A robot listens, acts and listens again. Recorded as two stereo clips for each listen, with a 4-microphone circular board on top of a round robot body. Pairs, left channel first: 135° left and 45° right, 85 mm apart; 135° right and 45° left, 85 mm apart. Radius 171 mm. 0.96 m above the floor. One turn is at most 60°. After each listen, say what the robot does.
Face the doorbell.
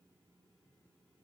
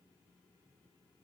Keep listening.
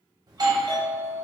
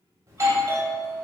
Facing the doorbell, 1 to 2 m away.